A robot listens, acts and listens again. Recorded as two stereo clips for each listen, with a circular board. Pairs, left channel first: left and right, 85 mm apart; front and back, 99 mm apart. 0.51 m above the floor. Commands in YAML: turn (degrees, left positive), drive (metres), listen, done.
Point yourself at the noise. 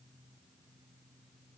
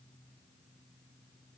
listen: true
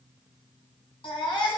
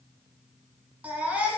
turn: 105
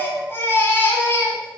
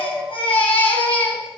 turn: 25
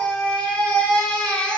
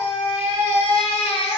turn: 10
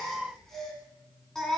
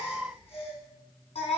done: "Facing the baby crying."